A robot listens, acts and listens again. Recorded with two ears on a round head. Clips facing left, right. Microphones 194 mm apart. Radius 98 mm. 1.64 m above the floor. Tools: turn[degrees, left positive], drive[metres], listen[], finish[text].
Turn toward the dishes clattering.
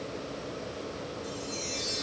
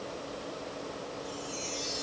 Action: listen[]
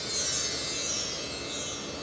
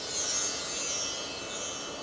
Action: listen[]
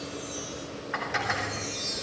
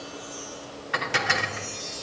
Thought: The dishes clattering: about 40° right or 140° right.
Action: turn[-40]
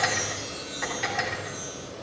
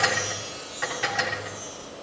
Action: finish[Facing the dishes clattering, 2 to 4 m away.]